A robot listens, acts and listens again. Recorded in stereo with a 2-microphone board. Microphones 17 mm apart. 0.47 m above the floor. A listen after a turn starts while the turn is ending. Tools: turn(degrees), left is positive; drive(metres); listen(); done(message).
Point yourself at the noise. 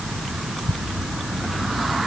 listen()
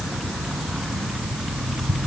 listen()
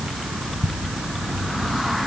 done("I can't make out anything to turn to.")